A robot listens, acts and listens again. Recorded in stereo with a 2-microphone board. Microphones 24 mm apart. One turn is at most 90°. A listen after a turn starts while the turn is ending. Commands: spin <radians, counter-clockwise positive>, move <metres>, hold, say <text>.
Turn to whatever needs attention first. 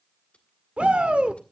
spin -0.96
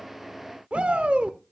spin -1.13
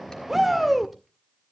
say Found it: a shout, straight ahead, 1 to 2 m away.